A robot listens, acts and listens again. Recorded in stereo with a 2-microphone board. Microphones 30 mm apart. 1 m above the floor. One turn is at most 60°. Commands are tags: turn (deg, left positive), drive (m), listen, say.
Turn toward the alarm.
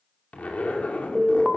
<turn deg="30"/>
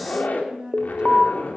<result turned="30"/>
<turn deg="-25"/>
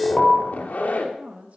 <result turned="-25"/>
<say>Facing the alarm, 1 to 2 m away.</say>